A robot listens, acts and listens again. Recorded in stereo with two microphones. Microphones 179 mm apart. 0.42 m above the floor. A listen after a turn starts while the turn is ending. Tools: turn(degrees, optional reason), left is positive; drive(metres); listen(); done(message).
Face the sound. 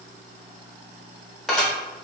turn(degrees=30)
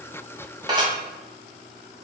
turn(degrees=-25, reason="So it is at 25° right.")
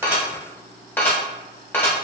turn(degrees=15, reason="The dishes clattering is now 15° left.")
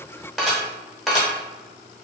done("Facing the dishes clattering.")